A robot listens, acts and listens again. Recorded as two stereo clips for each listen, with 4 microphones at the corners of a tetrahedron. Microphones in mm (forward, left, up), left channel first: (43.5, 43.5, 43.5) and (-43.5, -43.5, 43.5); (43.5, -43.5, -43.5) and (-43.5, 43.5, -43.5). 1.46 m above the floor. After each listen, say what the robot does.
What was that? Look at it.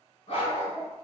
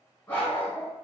Turn 25° left.
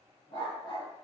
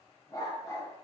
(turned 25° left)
Turn 10° left.
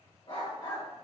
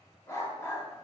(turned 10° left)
Turn 15° left.
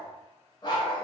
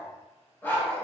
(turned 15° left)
Turn 30° left.
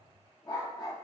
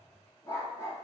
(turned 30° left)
Turn 10° left.
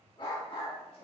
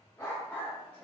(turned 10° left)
Turn 30° left.
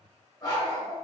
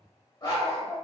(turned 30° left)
Facing the dog barking.